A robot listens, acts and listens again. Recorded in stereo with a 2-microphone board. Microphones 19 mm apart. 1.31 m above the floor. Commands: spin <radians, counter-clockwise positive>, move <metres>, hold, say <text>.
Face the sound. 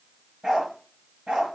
spin -1.22
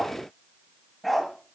say Found it: a dog barking, straight ahead, over 4 m away.